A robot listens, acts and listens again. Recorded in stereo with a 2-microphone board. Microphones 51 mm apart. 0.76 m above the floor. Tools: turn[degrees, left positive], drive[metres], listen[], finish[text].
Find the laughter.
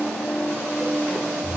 Action: listen[]
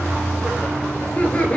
Thought: The laughter: about 25° left or 155° left.
Action: turn[25]
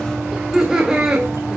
Thought: So it is at 15° right.
Action: turn[-15]
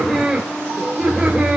Thought: The laughter is now 10° right.
Action: turn[-10]
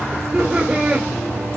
Thought: The laughter is now 15° right.
Action: turn[-15]
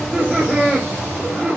Action: finish[Found it: laughter, straight ahead.]